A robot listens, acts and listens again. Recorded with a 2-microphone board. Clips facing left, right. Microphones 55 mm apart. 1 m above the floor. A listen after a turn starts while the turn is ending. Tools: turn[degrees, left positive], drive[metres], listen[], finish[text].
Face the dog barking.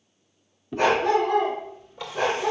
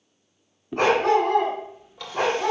Action: turn[-90]
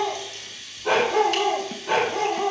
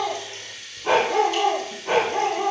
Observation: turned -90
Thought: So it is at 30° right.
Action: turn[-30]
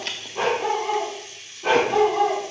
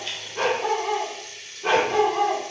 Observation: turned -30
Action: finish[Found it: a dog barking, straight ahead.]